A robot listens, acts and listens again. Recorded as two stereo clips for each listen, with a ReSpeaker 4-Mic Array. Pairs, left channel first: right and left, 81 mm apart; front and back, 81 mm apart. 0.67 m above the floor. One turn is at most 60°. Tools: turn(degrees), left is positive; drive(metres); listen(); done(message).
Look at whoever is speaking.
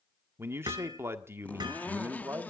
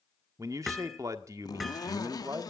turn(degrees=60)
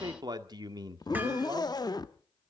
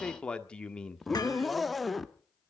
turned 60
turn(degrees=60)
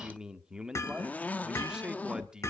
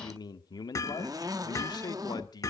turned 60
turn(degrees=10)
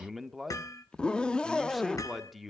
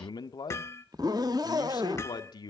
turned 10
done("Found it: a man speaking, straight ahead, 1 to 2 m away.")